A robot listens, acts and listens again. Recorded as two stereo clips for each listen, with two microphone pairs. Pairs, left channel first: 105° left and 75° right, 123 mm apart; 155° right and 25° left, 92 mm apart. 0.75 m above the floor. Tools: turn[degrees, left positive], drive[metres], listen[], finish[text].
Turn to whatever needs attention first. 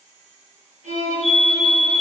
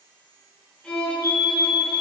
Thought: The fire alarm: 105° right.
Action: turn[-105]
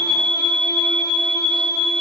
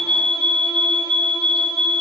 Thought: The fire alarm is now 25° left.
Action: turn[25]
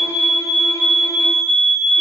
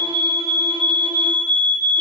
Action: finish[Found it: a fire alarm, straight ahead.]